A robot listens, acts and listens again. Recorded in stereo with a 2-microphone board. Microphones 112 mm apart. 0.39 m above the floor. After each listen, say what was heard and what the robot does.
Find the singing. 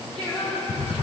Turn 30° left.
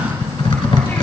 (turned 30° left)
Keep listening.
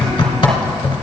Keep listening.
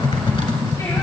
I heard singing, but can't make it out now. It was about 20° right or 140° left.